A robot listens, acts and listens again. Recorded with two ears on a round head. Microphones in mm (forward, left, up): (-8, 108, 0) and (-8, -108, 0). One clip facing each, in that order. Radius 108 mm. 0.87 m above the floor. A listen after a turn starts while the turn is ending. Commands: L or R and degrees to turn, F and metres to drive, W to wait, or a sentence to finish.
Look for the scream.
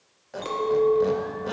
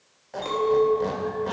W
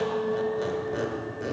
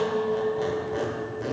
W
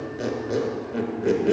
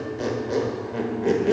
I can't make out a scream, only a squeak and a clink.